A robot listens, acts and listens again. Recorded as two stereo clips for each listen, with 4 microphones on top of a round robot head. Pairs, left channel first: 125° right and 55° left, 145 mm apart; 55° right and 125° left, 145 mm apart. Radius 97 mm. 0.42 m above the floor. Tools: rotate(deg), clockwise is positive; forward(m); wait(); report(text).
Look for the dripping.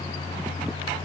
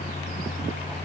wait()
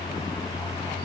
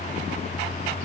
wait()
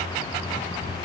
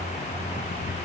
report("I can't make out dripping to turn to.")